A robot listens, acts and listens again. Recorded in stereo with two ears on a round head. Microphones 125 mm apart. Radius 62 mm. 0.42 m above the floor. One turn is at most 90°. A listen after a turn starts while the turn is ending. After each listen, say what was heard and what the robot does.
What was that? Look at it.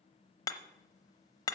The hammering: about 25° left or 155° left. Turn 25° left.
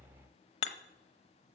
So it is at 125° left. Turn 90° left.
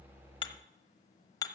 The hammering is now 25° left. Turn 25° left.
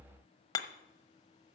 The hammering is now 30° left. Turn 30° left.
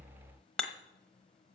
Facing the hammering, under 1 m away.